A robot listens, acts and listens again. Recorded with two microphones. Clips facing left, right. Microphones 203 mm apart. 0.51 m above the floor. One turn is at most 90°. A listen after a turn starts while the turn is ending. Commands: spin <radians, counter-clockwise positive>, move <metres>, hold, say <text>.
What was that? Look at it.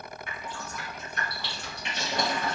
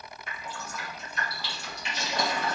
spin 0.96
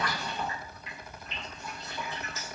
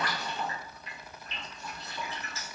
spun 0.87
spin 0.26
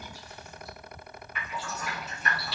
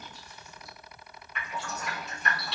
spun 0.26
say Found it: dripping, straight ahead.